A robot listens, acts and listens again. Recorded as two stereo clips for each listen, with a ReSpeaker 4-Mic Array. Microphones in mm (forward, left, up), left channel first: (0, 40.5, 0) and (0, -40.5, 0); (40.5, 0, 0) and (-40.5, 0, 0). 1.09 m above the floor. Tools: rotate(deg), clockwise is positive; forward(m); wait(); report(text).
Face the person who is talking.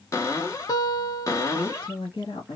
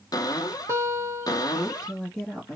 rotate(-85)
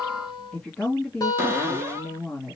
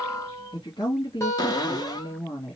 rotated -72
rotate(-10)
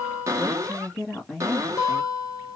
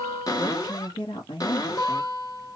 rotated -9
report("Found it: a woman speaking, straight ahead.")